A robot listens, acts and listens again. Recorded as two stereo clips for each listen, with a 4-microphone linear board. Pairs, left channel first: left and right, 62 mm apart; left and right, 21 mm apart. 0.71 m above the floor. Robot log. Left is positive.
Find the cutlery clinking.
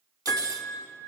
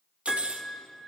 note: The cutlery clinking: about 75° right or 105° right.
cmd yaw -75
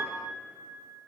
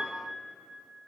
cmd idle
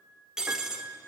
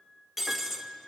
note: So it is at 10° right.
cmd yaw -10
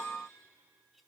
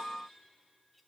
cmd idle
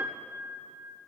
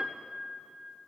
cmd idle
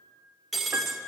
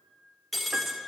end: Found it: cutlery clinking, straight ahead.